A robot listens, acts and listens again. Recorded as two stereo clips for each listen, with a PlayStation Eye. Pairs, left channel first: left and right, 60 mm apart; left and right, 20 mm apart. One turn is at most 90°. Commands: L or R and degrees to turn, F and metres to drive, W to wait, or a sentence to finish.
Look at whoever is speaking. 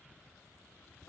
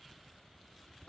W
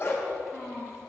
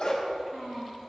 R30
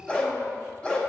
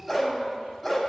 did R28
W
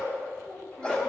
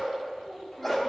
W
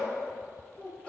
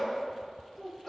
L20
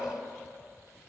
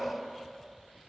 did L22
W
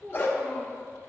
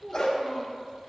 Found it: a child speaking, straight ahead, over 4 m away.